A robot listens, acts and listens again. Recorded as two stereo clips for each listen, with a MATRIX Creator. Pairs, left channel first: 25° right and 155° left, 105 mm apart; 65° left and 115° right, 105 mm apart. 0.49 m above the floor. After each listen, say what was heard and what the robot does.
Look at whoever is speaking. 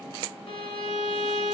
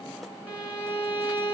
Keep listening.
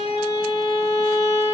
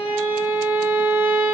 Keep listening.
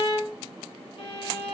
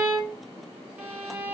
I can't make out anyone speaking, only a violin.